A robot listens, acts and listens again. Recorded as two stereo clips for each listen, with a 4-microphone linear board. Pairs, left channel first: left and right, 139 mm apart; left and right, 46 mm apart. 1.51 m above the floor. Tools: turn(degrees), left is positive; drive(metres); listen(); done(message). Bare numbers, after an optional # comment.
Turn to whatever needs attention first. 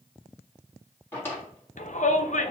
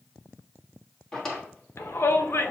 # The shout: about 65° left or 115° left.
turn(65)
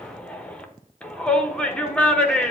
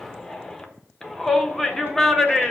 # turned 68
# So it is at 10° left.
turn(10)
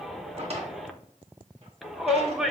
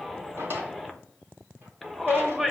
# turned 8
done("Found it: a shout, straight ahead, under 1 m away.")